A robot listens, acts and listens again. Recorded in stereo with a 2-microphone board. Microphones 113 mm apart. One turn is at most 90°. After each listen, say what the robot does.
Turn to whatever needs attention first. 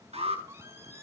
Turn 60° right.
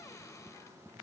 Keep listening.
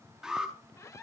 Facing the alarm, over 4 m away.